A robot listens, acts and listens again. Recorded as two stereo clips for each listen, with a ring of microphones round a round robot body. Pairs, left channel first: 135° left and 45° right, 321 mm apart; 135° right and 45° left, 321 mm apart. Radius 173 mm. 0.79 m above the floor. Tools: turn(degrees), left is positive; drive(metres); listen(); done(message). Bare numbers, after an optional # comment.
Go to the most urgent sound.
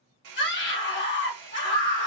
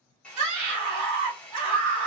# The scream: 80° left.
turn(80)
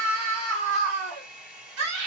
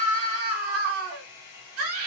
drive(1.0)
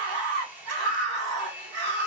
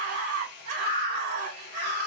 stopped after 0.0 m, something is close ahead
done("Something is in my way. I am facing the scream but have not reached it.")